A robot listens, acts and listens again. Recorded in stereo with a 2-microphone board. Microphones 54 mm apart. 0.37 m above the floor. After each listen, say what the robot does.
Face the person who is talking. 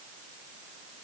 Keep listening.
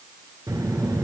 Turn 90° right.
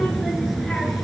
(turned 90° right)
Facing the child speaking.